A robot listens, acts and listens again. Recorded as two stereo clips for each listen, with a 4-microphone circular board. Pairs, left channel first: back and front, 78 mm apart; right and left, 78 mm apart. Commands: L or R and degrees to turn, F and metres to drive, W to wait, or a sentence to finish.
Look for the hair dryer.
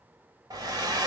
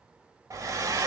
L40
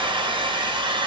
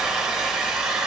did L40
Found it: a hair dryer, straight ahead, under 1 m away.